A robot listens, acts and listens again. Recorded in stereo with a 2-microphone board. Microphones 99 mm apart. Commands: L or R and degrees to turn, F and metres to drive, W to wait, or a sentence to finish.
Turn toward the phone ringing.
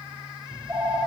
R25
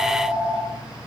Found it: a phone ringing, straight ahead.